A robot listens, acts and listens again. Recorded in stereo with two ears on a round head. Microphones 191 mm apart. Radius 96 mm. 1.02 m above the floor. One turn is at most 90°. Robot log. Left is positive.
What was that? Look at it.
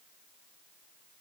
cmd idle
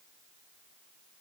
cmd idle
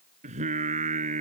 note: The singing: about 35° right or 145° right.
cmd yaw -35
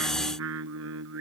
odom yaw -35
note: So it is at 110° right.
cmd yaw -90
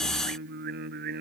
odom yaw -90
note: The singing is now 45° right.
cmd yaw -45
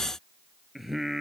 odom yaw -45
end: Found it: singing, straight ahead.